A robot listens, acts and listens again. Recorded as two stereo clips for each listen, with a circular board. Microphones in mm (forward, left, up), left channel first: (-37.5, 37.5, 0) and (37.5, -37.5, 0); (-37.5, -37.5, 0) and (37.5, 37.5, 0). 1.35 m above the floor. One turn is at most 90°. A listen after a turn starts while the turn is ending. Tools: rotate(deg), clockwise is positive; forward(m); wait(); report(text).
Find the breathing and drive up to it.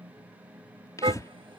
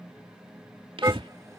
rotate(-75)
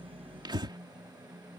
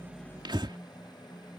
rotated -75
forward(1.0)
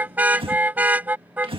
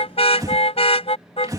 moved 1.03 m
rotate(10)
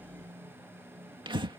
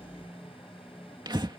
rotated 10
forward(1.0)
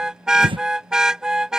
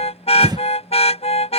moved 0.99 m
forward(1.0)
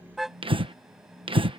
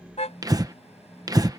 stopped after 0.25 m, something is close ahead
rotate(10)
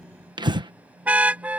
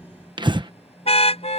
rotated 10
report("I am next to the breathing.")